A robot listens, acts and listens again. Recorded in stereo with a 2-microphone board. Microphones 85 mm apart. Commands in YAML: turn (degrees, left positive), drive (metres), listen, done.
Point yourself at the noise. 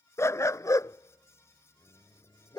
turn: 55
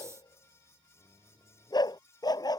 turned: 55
turn: 50
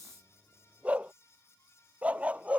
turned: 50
turn: -15
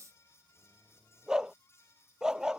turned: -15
done: "Found it: a dog barking, straight ahead."